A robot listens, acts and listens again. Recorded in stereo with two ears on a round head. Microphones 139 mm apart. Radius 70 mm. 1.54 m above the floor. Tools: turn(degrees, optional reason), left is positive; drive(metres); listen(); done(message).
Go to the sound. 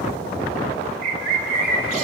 turn(degrees=-55, reason="The bird: about 55° right or 125° right.")
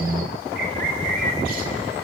turn(degrees=-65, reason="So it is at 65° right.")
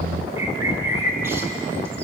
turn(degrees=-20, reason="The bird is now 20° right.")
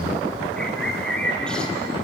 drive(metres=1.0)
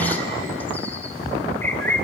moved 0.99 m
turn(degrees=15, reason="The bird is now 15° left.")
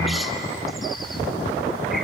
listen()
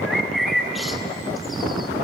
drive(metres=1.0)
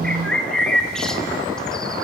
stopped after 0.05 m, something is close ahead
done("Arrived at the bird, straight ahead.")